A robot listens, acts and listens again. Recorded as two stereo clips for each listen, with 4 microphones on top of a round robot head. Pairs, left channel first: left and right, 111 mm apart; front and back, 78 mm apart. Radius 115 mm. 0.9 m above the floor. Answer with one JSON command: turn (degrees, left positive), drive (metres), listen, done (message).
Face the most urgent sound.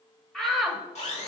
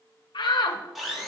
{"done": "Facing the shout, 1 to 2 m away."}